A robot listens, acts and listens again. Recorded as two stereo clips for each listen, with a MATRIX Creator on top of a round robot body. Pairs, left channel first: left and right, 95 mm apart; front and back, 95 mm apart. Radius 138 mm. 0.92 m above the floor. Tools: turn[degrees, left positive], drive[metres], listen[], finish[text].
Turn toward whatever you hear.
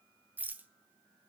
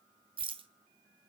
Thought: The rattle: 160° right.
Action: turn[-160]
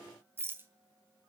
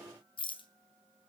Thought: The rattle is now 25° right.
Action: turn[-25]
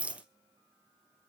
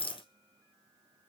Thought: The rattle is now 15° right.
Action: turn[-15]
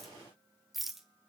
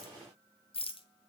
Action: finish[Found it: a rattle, straight ahead, 2 to 4 m away.]